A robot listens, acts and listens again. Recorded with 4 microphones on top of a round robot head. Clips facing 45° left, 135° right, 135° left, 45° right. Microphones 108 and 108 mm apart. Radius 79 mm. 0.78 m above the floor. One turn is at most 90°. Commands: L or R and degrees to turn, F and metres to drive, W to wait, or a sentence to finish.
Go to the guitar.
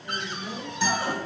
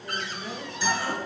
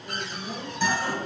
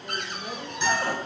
L85
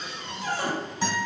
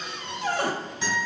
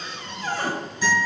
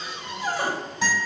R10
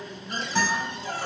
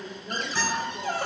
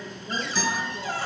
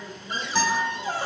F1.0
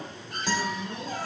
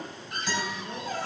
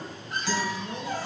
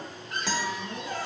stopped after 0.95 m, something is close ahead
R10
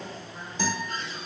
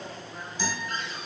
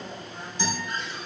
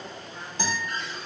Arrived at the guitar, straight ahead.